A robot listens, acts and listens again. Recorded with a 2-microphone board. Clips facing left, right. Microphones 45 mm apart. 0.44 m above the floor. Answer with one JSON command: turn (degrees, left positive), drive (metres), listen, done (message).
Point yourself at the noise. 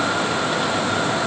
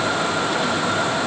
{"listen": true}
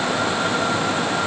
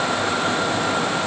{"listen": true}
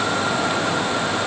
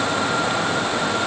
{"done": "I can't make out anything to turn to."}